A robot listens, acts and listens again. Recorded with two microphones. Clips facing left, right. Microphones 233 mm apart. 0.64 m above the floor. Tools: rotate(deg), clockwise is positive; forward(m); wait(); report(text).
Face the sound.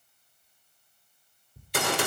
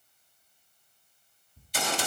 rotate(-65)
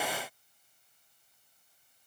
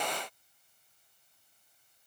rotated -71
wait()
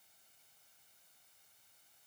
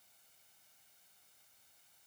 report("I heard a gunshot, but can't make it out now. It was about 5° right or 45° left.")